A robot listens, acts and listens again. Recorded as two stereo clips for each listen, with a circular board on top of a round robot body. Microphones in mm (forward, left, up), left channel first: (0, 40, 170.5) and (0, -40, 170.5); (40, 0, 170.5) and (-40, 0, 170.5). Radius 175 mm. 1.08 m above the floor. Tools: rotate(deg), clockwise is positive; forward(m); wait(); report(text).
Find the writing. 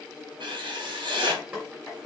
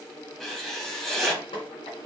rotate(90)
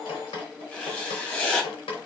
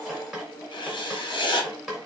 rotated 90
rotate(-15)
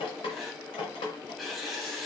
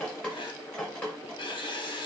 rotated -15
report("Facing the writing.")